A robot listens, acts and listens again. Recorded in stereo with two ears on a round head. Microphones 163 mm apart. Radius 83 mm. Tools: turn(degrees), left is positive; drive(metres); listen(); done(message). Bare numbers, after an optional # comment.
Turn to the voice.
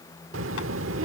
turn(-90)
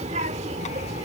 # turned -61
# So it is at 35° right.
turn(-35)
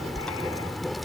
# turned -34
done("Facing the child speaking.")